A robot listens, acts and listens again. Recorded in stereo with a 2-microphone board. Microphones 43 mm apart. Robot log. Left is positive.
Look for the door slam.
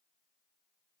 cmd idle
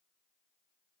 cmd idle
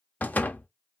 note: The door slam: about 40° left or 140° left.
cmd yaw +40
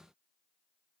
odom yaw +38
cmd idle
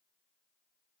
end: I heard a door slam, but can't make it out now. It was about 5° left or 100° left.